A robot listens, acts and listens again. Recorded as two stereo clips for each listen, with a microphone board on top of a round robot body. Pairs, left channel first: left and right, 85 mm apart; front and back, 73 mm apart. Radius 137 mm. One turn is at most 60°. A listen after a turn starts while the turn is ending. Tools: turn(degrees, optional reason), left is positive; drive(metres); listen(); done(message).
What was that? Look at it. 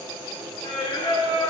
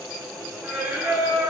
turn(degrees=60, reason="The singing: 130° left.")
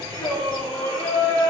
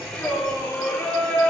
turn(degrees=60, reason="The singing is now 70° left.")
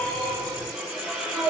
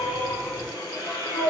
done("Found it: singing, straight ahead.")